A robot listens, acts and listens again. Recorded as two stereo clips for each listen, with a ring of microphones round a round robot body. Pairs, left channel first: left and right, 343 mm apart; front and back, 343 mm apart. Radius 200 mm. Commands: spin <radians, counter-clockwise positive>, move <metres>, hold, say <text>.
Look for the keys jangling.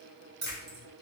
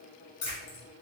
spin -0.52
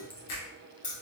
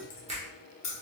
spin 0.44
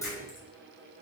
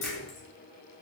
hold
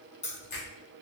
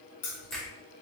spin 0.35
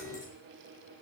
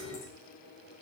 hold
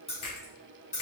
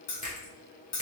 spin 0.35
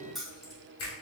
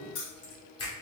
say Facing the keys jangling.